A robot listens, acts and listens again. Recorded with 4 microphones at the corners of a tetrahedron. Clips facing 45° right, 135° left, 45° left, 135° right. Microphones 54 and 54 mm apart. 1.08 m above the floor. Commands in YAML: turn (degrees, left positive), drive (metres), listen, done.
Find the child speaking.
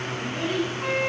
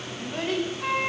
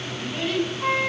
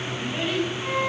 turn: 145
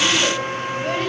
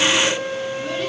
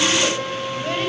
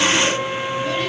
listen: true
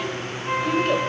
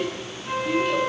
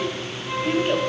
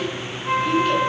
turn: -10
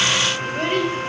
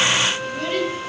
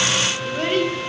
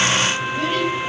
done: "Found it: a child speaking, straight ahead."